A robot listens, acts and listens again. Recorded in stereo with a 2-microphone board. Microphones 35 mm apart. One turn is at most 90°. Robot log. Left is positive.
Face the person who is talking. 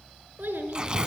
note: The child speaking: about 75° right or 105° right.
cmd yaw -75
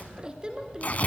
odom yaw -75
note: So it is at 25° right.
cmd yaw -25
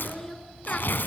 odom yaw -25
note: The child speaking is now 10° left.
cmd yaw +10
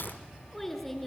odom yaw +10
end: Found it: a child speaking, straight ahead.